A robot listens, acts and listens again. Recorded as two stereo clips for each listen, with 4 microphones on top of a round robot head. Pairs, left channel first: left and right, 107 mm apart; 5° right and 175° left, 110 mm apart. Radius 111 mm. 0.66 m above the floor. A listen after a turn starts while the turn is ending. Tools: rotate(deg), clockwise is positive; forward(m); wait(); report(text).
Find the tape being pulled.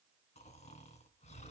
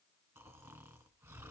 wait()
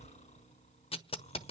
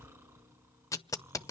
rotate(-60)
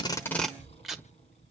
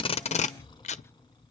report("Facing the tape being pulled.")